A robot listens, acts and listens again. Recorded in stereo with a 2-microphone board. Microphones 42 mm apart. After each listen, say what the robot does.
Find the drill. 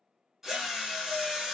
Turn 30° right.
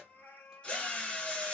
Turn 20° left.
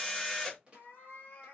Facing the drill.